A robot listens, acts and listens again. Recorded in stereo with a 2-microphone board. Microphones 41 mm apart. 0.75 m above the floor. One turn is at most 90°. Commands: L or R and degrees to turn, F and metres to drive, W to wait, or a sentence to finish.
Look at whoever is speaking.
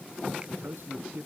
R90
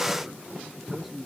Found it: a man speaking, straight ahead.